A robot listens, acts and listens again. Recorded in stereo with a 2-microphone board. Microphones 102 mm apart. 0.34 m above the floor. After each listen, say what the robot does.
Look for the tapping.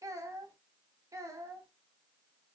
Keep listening.
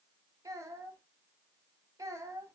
Keep listening.
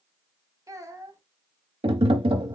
Turn 60° right.
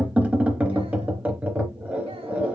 Turn 15° right.
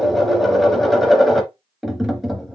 Found it: tapping, straight ahead.